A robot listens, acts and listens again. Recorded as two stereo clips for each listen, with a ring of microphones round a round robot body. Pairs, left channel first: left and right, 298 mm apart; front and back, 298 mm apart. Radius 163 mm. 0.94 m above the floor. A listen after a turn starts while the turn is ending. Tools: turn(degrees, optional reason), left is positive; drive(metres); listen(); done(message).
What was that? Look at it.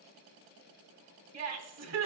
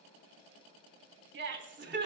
turn(degrees=-125, reason="The laughter: 125° right.")
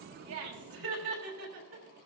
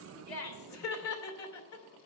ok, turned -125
turn(degrees=-25, reason="The laughter is now 25° right.")
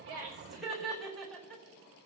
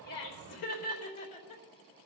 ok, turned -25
done("Facing the laughter.")